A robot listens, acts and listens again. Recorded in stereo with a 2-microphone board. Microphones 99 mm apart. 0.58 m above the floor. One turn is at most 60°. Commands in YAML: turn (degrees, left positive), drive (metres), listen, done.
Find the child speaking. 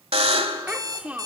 turn: -30
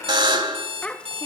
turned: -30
turn: 15
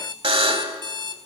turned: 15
listen: true
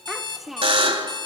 done: "Found it: a child speaking, straight ahead."